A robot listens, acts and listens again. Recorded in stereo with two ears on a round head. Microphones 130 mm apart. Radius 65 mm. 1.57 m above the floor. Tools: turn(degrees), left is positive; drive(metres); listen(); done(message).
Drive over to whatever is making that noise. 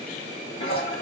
turn(degrees=45)
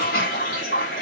turn(degrees=90)
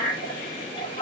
turn(degrees=35)
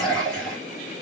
drive(metres=1.0)
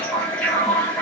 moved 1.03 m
turn(degrees=10)
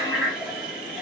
drive(metres=1.0)
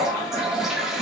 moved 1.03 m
drive(metres=1.0)
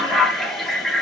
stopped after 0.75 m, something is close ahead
done("Arrived at the toilet flushing, straight ahead.")